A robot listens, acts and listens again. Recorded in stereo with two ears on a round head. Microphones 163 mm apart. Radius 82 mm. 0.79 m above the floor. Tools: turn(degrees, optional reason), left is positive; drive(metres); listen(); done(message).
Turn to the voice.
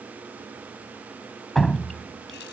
listen()
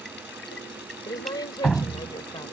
turn(degrees=20, reason="The woman speaking: about 20° left or 160° left.")
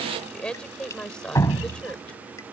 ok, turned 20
done("Found it: a woman speaking, straight ahead.")